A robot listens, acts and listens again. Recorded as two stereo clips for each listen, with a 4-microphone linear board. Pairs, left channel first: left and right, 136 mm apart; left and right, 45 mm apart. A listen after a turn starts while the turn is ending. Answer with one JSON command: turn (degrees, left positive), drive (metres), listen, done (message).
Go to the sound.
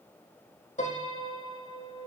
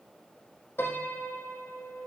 {"turn": 60}
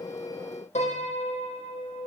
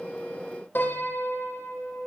{"turn": 55}
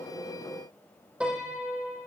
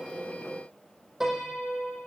{"turn": -10}
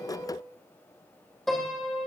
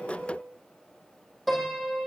{"drive": 1.0}
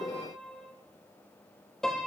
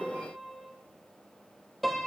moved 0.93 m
{"drive": 1.0}
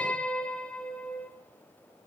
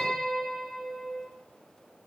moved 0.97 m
{"turn": 10}
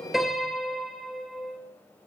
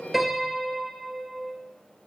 {"drive": 1.0}
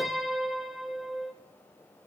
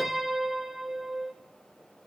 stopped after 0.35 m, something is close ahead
{"done": "I am next to the piano."}